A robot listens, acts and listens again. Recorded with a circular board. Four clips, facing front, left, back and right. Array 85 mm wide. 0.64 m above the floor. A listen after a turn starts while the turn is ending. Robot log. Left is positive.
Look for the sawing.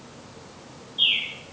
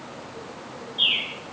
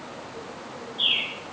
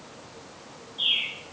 cmd idle
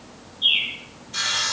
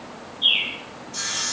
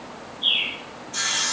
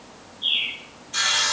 note: The sawing: 75° right.
cmd yaw -75
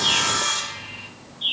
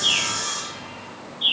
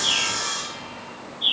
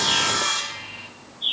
note: The sawing is now 40° right.
cmd yaw -40
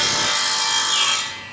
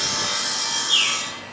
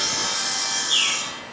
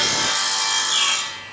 note: The sawing is now 25° right.
cmd yaw -25
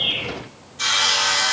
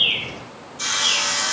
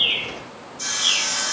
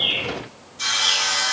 end: Found it: sawing, straight ahead, 1 to 2 m away.